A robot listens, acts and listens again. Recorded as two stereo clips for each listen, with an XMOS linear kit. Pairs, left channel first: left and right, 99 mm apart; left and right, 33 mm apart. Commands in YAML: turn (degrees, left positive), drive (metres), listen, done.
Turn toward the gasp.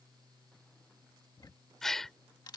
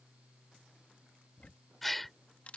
turn: 30
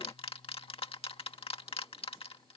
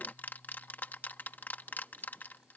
listen: true
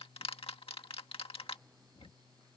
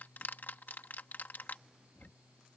done: "I heard a gasp, but can't make it out now. It was about 25° right or 145° left."